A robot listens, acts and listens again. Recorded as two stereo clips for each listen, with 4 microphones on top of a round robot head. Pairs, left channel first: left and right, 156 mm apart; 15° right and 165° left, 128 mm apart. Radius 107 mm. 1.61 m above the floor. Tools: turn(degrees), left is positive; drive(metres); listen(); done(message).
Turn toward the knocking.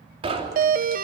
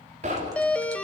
turn(degrees=-145)
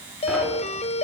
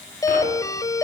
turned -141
listen()
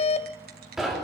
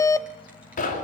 done("Facing the knocking.")